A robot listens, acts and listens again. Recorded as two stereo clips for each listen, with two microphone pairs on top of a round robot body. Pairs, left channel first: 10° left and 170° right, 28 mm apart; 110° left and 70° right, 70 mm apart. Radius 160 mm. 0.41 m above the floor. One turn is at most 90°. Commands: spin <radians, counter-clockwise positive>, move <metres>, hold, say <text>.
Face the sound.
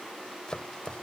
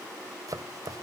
spin -0.79
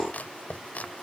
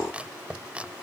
say Found it: chopping, straight ahead.